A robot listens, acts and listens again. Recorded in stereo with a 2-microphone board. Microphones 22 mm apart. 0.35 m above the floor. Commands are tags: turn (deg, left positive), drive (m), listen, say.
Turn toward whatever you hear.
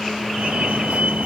<turn deg="-70"/>
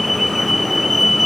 <say>Found it: a fire alarm, straight ahead.</say>